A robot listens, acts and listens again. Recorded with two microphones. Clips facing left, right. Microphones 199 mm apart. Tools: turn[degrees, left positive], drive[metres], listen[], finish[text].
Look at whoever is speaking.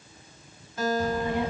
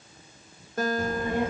Thought: The child speaking: about 55° right or 125° right.
Action: turn[-55]
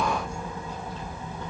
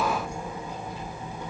Thought: So it is at 20° right.
Action: turn[-20]
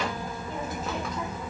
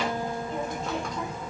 Action: finish[Facing the child speaking, 1 to 2 m away.]